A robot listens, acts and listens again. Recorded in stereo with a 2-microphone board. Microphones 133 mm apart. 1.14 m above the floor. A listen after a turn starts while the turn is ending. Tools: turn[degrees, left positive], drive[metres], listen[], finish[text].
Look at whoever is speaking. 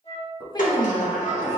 Thought: The woman speaking: about 30° left or 150° left.
Action: turn[30]
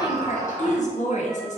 Thought: So it is at 115° left.
Action: turn[115]
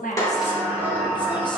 Action: listen[]
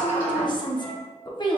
Thought: The woman speaking is now 35° left.
Action: turn[35]
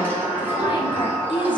Thought: The woman speaking is now 35° left.
Action: turn[35]
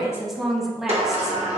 Action: finish[Found it: a woman speaking, straight ahead.]